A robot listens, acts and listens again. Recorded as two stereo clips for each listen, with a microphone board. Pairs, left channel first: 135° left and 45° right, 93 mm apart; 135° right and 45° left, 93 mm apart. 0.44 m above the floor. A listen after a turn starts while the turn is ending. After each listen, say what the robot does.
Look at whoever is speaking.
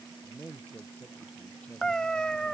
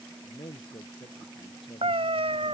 Turn 150° right.
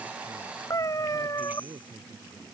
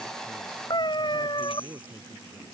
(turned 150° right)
Turn 15° right.
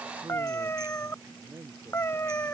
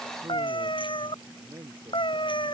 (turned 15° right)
Found it: a man speaking, straight ahead.